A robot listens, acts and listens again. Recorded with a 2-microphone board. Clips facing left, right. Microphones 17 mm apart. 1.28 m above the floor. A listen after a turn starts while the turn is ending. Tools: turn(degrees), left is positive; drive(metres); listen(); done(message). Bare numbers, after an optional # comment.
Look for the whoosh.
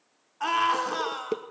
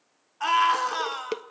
listen()
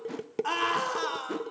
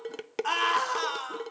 listen()
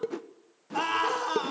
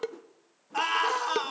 # The whoosh: about 60° left or 120° left.
turn(60)
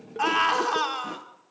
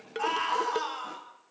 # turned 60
listen()
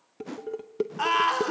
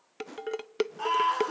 # So it is at 15° left.
turn(15)
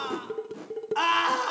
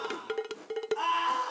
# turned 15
done("Found it: a whoosh, straight ahead.")